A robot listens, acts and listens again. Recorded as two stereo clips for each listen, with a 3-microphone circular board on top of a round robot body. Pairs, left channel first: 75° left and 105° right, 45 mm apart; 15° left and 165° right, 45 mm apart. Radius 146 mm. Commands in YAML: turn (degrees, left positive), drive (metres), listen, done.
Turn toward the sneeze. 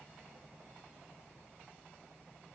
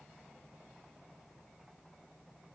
listen: true
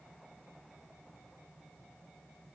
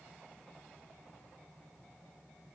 listen: true
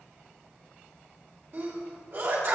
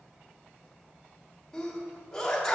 turn: -65
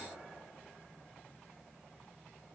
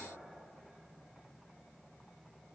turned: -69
done: "I heard a sneeze from this way, but can't make it out now."